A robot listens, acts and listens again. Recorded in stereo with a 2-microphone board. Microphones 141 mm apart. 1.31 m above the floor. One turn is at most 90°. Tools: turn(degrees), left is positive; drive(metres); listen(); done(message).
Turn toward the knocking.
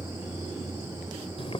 listen()
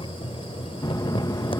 turn(degrees=25)
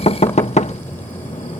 turn(degrees=90)
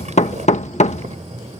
turn(degrees=55)
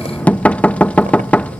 turn(degrees=10)
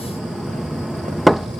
done("Found it: knocking, straight ahead.")